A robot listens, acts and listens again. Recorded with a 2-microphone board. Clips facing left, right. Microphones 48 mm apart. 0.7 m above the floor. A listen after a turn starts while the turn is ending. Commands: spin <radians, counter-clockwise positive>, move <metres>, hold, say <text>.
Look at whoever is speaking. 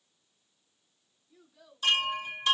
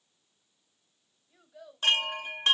spin -1.57
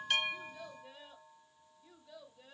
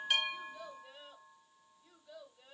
spin 0.17
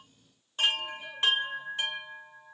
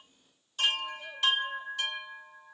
hold
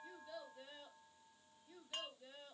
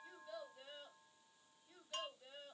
say Found it: a child speaking, straight ahead, 1 to 2 m away.